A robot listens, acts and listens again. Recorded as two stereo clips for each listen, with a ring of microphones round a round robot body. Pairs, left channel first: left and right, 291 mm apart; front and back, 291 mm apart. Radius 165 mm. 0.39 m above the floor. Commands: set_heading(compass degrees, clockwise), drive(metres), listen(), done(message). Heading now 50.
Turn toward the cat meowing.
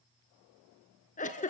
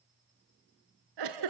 listen()
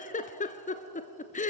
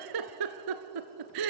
listen()
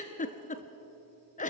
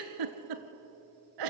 done("I can't make out a cat meowing, only a giggle.")